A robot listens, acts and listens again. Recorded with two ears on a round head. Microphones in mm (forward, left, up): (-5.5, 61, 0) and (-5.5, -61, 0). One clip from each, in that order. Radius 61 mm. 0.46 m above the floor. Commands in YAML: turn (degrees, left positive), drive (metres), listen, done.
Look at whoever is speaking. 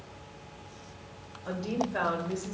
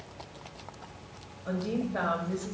turn: 55
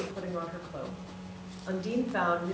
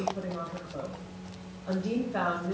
turn: 55
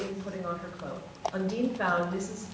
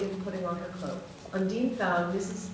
turn: 10
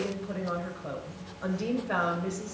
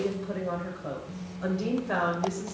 done: "Found it: a woman speaking, straight ahead, 1 to 2 m away."